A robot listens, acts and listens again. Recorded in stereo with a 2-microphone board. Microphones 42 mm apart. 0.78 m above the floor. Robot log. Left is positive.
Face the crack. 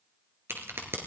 note: The crack: about 75° right or 105° right.
cmd yaw -75
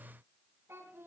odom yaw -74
cmd idle
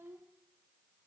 end: I heard a crack, but can't make it out now. It was about straight ahead or 35° right.